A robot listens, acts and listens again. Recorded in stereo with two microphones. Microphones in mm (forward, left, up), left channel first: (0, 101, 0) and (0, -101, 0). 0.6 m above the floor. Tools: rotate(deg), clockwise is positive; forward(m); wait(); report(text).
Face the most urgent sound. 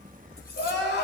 rotate(-65)
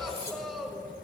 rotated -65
report("Facing the crying.")